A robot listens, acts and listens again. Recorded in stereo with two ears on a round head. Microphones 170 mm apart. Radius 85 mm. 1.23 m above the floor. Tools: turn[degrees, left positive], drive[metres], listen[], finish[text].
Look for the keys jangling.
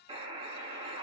Action: listen[]
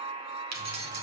Thought: The keys jangling: about 55° right or 125° right.
Action: turn[-55]
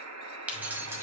Thought: So it is at 15° right.
Action: turn[-15]
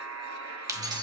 Thought: The keys jangling is now 25° right.
Action: turn[-25]
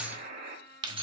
Thought: The keys jangling is now 30° right.
Action: turn[-30]
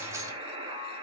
Action: listen[]
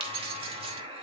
Thought: The keys jangling is now 30° right.
Action: turn[-30]
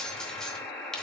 Action: finish[Facing the keys jangling, 1 to 2 m away.]